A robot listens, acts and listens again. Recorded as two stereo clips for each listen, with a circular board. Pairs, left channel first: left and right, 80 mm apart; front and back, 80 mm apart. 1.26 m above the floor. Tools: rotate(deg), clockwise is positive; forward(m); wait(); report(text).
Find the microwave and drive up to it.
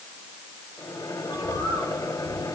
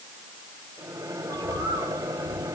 rotate(-120)
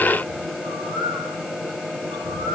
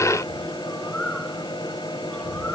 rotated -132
rotate(10)
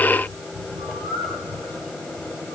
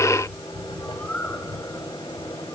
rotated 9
forward(1.0)
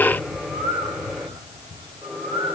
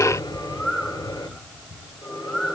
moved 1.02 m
forward(1.0)
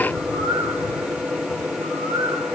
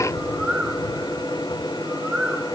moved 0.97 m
rotate(10)
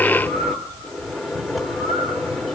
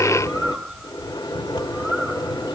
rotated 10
forward(1.0)
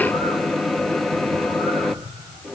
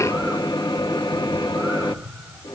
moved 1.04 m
forward(1.0)
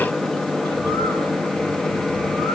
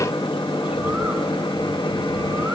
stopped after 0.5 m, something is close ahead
report("Arrived at the microwave, straight ahead.")